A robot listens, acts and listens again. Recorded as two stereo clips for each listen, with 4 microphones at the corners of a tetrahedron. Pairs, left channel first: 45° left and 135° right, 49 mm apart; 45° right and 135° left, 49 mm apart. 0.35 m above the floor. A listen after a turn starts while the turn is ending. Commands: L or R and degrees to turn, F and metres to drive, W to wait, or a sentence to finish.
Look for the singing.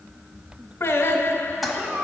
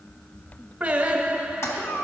L70
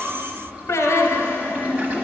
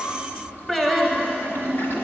L35
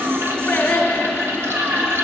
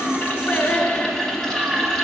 Found it: singing, straight ahead.